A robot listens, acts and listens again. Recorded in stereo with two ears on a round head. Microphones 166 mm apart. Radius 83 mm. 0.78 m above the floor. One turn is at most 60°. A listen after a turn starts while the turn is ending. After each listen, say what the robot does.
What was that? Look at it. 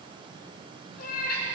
Turn 55° left.
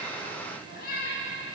Turn 50° left.
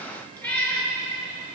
Found it: a cat meowing, straight ahead.